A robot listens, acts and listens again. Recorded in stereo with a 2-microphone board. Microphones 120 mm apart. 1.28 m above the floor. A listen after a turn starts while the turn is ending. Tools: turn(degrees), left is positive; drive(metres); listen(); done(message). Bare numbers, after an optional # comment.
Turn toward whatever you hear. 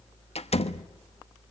# The door slam: about 60° left or 120° left.
turn(60)
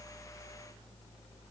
listen()
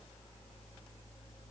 done("I heard a door slam, but can't make it out now. It was about straight ahead or 60° left.")